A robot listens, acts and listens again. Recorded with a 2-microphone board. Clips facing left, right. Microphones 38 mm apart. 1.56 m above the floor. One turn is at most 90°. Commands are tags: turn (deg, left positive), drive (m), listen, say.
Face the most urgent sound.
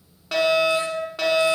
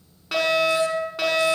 <turn deg="30"/>
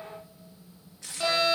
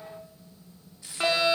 <turn deg="-30"/>
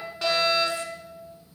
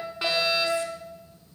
<turn deg="-10"/>
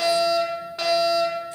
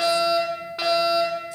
<say>Facing the fire alarm, over 4 m away.</say>